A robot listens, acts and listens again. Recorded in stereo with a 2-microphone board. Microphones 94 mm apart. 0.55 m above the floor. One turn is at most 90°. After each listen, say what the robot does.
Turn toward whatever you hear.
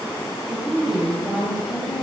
Turn 30° left.
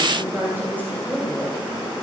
Turn 30° right.
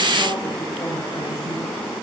Keep listening.
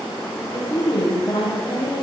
Turn 50° left.
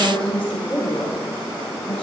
Turn 15° left.
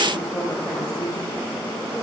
Facing the woman speaking, 2 to 4 m away.